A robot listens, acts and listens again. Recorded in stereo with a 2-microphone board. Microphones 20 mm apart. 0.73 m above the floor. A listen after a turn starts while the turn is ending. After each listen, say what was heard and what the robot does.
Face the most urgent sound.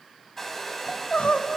Turn 90° left.
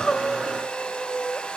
So it is at 10° left. Turn 10° left.
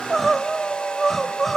Found it: crying, straight ahead.